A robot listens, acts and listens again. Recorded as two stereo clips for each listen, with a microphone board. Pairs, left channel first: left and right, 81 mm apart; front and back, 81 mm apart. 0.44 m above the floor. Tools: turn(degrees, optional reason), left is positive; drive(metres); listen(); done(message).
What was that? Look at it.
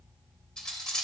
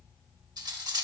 turn(degrees=170, reason="The cutlery clinking: 170° left.")
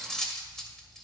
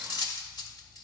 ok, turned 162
done("Facing the cutlery clinking, under 1 m away.")